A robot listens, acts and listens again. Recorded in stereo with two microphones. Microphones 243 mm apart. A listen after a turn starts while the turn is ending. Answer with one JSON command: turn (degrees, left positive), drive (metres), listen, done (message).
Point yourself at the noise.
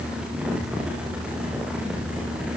{"listen": true}
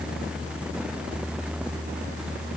{"listen": true}
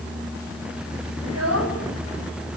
{"turn": -90}
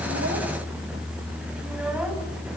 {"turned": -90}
{"listen": true}
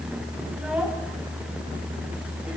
{"listen": true}
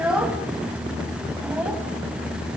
{"done": "Facing the child speaking, over 4 m away."}